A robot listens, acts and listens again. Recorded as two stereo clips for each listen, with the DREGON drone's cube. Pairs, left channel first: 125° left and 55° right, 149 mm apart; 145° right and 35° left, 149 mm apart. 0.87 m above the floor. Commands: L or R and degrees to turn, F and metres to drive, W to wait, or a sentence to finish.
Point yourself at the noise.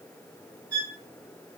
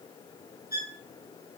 R135
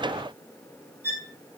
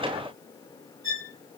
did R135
L20
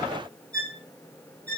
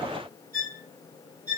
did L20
Facing the violin, 1 to 2 m away.